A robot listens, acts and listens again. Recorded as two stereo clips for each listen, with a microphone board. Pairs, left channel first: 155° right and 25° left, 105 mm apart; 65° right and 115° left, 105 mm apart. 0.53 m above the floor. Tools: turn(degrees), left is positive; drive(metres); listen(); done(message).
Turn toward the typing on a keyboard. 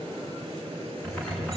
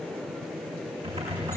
turn(degrees=125)
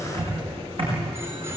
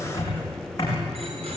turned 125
turn(degrees=-10)
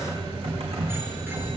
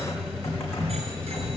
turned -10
done("Facing the typing on a keyboard, over 4 m away.")